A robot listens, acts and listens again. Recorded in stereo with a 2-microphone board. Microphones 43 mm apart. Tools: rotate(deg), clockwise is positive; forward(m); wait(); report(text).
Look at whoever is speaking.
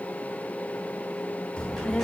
rotate(-20)
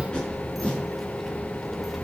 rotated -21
report("Facing the child speaking, 1 to 2 m away.")